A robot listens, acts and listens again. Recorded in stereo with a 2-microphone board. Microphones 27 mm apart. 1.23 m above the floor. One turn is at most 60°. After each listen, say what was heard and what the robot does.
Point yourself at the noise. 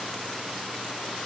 Keep listening.
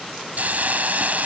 The hiss: about 70° right or 110° right. Turn 60° right.
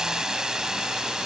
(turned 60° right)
So it is at 25° right. Turn 25° right.
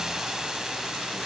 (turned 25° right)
Keep listening.
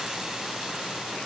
Keep listening.
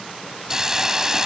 The hiss is now 25° right. Turn 25° right.
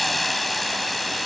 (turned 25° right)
Facing the hiss.